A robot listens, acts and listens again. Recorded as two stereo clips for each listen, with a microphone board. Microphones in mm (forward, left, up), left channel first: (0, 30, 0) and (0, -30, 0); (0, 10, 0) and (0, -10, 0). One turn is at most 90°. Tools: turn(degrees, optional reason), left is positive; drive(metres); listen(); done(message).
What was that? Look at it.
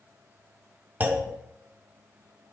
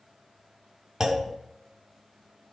turn(degrees=-30, reason="The clunk: about 30° right or 150° right.")
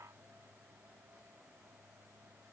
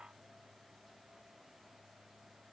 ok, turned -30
listen()
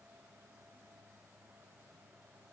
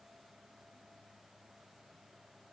done("I heard a clunk, but can't make it out now. It was about straight ahead or 120° right.")